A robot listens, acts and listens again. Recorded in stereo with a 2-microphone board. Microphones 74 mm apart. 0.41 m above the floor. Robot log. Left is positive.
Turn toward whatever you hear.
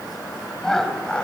cmd yaw +30
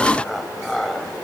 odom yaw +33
cmd yaw +30
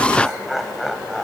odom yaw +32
cmd yaw +30
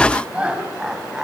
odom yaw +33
note: So it is at 10° right.
cmd yaw -10
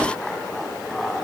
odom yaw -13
end: Facing the laughter.